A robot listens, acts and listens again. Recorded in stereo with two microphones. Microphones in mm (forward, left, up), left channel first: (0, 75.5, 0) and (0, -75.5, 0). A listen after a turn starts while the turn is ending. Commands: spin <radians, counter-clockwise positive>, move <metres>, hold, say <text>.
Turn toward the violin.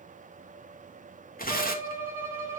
spin -0.26
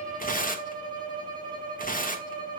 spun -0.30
spin -2.62
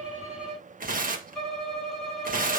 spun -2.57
say Found it: a violin, straight ahead.